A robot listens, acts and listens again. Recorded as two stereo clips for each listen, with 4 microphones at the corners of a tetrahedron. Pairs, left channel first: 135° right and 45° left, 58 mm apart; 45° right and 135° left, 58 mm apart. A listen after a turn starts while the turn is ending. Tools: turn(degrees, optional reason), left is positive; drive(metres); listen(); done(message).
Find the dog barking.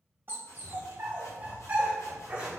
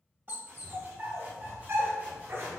turn(degrees=115, reason="The dog barking: 115° left.")
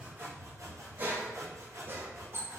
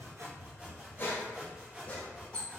turn(degrees=20, reason="The dog barking is now 20° left.")
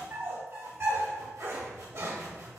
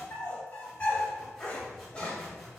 turn(degrees=25, reason="The dog barking is now 25° left.")
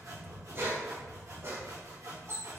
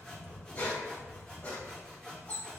turn(degrees=15, reason="The dog barking is now 15° left.")
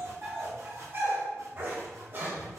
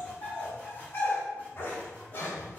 done("Facing the dog barking.")